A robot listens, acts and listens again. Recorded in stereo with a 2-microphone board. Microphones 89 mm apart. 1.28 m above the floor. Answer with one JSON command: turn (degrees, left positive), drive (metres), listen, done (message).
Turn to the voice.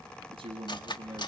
{"turn": -90}
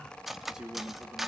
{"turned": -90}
{"done": "Facing the man speaking, 2 to 4 m away."}